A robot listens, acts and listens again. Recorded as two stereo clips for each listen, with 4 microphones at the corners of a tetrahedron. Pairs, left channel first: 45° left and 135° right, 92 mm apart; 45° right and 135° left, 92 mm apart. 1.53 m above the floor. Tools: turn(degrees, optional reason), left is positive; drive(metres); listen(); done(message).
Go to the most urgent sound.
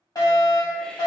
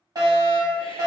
turn(degrees=90, reason="The fire alarm: 90° left.")
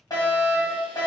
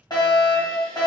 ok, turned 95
drive(metres=1.0)
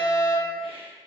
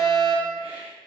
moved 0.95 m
turn(degrees=-10, reason="The fire alarm is now 10° right.")
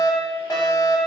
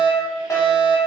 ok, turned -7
drive(metres=1.0)
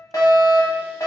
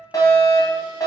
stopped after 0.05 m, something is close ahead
done("Arrived at the fire alarm, straight ahead.")